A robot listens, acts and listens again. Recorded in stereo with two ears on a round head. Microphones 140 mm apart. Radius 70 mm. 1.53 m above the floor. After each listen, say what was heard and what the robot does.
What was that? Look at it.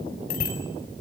The bicycle bell: about 60° left or 120° left. Turn 60° left.
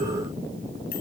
Keep listening.
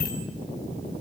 So it is at 60° left. Turn 60° left.
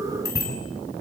The bicycle bell is now 20° left. Turn 20° left.
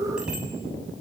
Facing the bicycle bell, over 4 m away.